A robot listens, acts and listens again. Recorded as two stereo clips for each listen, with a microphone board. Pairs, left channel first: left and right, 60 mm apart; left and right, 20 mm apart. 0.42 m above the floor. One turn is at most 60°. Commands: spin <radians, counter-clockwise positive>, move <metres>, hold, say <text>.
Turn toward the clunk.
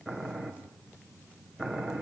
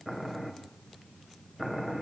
hold
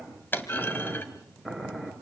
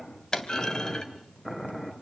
spin 0.70
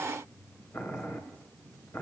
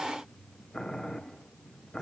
hold
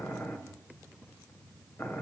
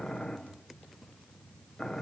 say I heard a clunk, but can't make it out now. It was about straight ahead or 100° left.